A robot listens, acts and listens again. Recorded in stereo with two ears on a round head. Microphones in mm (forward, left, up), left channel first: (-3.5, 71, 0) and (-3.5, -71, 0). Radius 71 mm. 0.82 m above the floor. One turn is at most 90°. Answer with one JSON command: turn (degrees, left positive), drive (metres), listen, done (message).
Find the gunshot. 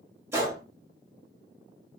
{"turn": -15}
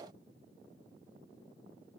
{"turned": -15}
{"listen": true}
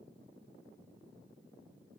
{"done": "I heard a gunshot, but can't make it out now. It was about straight ahead or 150° right."}